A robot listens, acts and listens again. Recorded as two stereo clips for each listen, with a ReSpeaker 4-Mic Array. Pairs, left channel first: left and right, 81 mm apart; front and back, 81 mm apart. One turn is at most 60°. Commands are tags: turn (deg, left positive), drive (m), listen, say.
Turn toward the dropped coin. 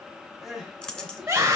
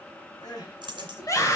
<turn deg="60"/>
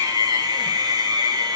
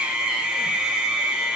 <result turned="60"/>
<turn deg="60"/>
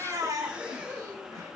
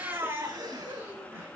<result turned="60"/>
<turn deg="45"/>
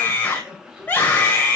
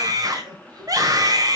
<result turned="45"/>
<say>I heard a dropped coin from this way, but can't make it out now.</say>